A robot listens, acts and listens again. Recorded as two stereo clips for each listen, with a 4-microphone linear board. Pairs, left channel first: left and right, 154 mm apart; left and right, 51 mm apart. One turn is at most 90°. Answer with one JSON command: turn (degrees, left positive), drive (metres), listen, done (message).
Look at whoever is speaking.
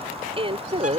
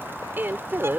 {"turn": -40}
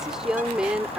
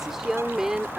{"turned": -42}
{"turn": -10}
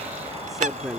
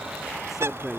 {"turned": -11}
{"done": "Found it: a woman speaking, straight ahead."}